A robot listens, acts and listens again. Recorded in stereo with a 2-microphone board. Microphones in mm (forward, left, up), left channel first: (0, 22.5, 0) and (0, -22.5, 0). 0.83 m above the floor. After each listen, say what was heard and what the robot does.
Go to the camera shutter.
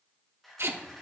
Turn 30° left.
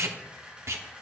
So it is at 25° right. Turn 25° right.
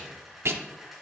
Drive 1.0 m forward.
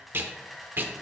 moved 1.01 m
Drive 1.0 m forward.
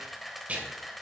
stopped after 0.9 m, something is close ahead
Arrived at the camera shutter, straight ahead.